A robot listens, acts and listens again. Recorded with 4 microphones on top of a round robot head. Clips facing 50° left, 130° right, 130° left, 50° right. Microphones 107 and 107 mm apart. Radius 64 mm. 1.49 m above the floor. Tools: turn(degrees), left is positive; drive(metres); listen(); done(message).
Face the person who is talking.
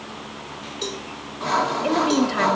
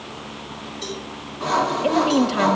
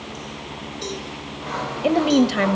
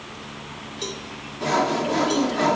turn(degrees=155)
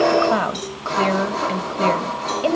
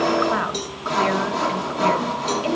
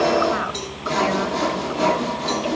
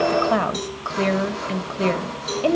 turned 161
done("Found it: a woman speaking, straight ahead.")